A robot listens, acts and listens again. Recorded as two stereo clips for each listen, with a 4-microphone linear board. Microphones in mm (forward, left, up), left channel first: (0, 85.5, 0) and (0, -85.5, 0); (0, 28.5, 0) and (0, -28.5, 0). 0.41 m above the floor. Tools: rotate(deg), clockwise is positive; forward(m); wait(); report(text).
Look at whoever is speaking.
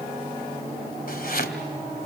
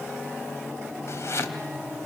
wait()
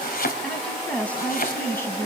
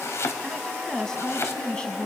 rotate(-15)
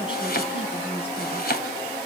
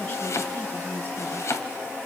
rotate(-35)
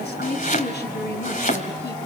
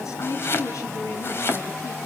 rotate(-105)
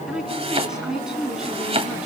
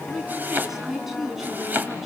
report("Facing the woman speaking, 2 to 4 m away.")